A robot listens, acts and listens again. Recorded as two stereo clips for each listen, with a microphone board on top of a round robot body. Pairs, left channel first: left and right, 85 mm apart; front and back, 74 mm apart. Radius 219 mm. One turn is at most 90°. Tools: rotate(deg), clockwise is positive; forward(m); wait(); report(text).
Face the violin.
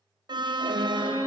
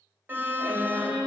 rotate(-90)
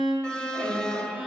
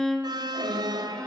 rotate(-75)
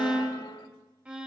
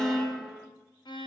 rotate(10)
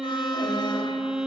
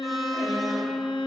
report("Found it: a violin, straight ahead, over 4 m away.")